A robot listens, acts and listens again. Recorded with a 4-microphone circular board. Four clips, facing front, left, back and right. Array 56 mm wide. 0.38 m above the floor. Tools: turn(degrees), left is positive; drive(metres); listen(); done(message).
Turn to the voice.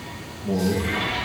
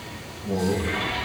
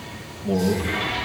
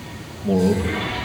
turn(degrees=-90)
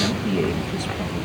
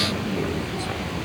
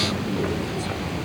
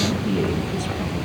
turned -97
done("Facing the man speaking, over 4 m away.")